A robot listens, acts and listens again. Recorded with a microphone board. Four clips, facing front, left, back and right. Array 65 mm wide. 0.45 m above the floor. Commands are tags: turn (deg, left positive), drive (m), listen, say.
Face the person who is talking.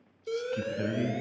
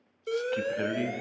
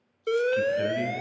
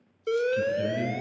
<turn deg="105"/>
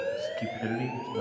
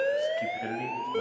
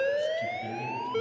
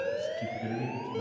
<turn deg="40"/>
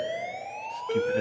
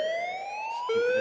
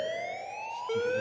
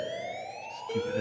<listen/>
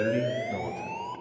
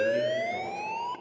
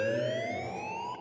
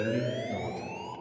<say>Found it: a man speaking, straight ahead.</say>